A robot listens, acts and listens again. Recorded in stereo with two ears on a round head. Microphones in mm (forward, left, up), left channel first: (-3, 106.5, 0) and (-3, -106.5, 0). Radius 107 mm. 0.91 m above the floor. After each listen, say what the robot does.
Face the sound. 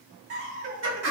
Turn 55° right.
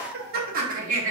Turn 30° right.
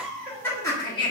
Turn 20° left.
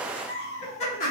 Turn 35° left.
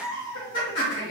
Turn 20° left.
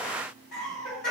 Found it: laughter, straight ahead, 1 to 2 m away.